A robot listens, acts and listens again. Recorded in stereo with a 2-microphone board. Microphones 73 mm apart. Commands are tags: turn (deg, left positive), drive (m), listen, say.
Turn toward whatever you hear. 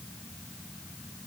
<listen/>
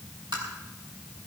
<turn deg="-90"/>
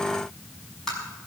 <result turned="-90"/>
<say>Found it: tapping, straight ahead, over 4 m away.</say>